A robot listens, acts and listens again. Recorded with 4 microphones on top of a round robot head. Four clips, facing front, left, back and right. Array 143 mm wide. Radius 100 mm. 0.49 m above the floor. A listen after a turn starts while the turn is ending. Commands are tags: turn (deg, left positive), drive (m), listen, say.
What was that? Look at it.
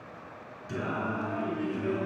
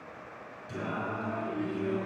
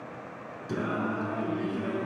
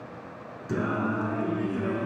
<turn deg="-115"/>
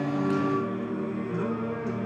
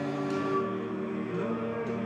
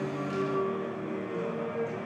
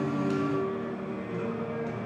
<turn deg="30"/>
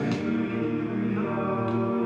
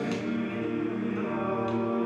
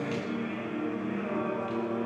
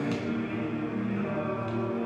<turn deg="20"/>
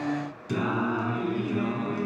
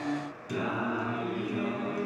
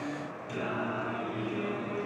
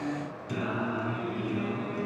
<say>Found it: singing, straight ahead.</say>